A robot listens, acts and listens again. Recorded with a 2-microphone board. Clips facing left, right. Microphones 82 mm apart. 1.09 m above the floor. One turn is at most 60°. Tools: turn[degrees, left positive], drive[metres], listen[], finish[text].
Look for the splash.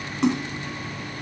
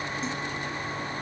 Thought: The splash: about 70° left or 110° left.
Action: turn[60]
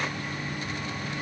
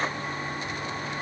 Action: listen[]
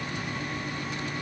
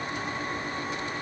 Action: finish[I heard a splash, but can't make it out now. It was about 10° left or 50° left.]